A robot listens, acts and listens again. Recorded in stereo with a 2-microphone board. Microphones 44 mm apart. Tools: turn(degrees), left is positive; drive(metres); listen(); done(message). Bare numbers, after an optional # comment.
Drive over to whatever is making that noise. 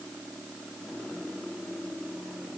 listen()
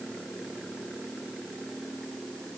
listen()
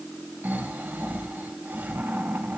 # The snoring: about 45° right or 135° right.
turn(-45)
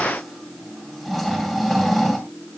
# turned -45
drive(1.0)
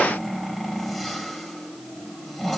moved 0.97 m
drive(1.0)
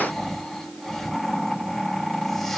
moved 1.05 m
# The snoring is now 10° left.
turn(10)
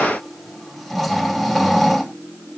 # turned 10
drive(1.0)
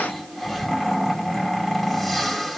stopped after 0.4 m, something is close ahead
done("I am next to the snoring.")